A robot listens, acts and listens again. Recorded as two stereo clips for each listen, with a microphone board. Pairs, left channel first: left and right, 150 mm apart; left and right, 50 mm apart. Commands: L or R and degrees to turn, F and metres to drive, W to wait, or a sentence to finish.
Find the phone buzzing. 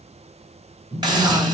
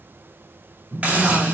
R90
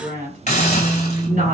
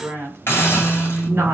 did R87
R10
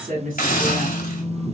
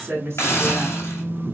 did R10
Facing the phone buzzing.